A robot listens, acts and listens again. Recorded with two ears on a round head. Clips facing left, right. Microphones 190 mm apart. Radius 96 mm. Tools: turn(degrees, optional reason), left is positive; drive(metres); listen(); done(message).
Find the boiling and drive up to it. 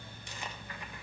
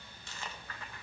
listen()
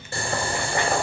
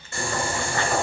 turn(degrees=30, reason="The boiling: about 30° left or 150° left.")
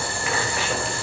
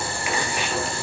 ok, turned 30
turn(degrees=115, reason="So it is at 115° left.")
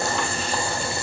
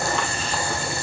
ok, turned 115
turn(degrees=20, reason="The boiling is now 20° left.")
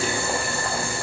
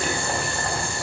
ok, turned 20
drive(metres=1.0)
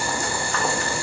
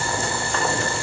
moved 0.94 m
turn(degrees=10, reason="The boiling is now 10° left.")
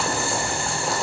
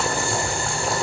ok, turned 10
drive(metres=1.0)
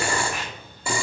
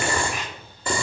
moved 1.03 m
turn(degrees=10, reason="The boiling is now 10° left.")
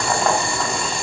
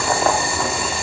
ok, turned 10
drive(metres=1.0)
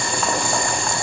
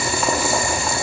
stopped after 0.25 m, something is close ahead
done("I am next to the boiling.")